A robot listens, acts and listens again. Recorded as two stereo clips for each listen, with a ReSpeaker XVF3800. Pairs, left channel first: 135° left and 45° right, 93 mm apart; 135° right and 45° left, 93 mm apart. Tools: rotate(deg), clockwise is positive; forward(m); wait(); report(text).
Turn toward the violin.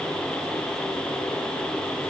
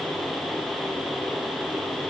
wait()
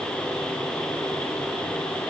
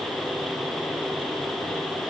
wait()
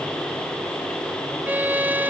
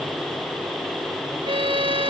rotate(-25)
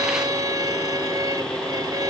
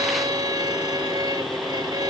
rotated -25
report("Facing the violin.")